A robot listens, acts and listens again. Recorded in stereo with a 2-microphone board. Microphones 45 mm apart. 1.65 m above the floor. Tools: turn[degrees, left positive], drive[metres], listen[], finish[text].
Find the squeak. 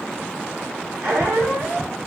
Thought: The squeak: about 65° right or 115° right.
Action: turn[-65]
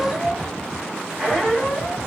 Action: finish[Facing the squeak, 1 to 2 m away.]